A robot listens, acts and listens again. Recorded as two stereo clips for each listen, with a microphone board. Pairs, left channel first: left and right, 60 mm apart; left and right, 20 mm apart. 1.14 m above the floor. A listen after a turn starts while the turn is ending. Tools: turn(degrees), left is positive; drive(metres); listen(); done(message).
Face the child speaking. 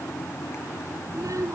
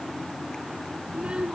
turn(degrees=-65)
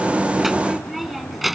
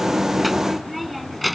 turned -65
done("Facing the child speaking.")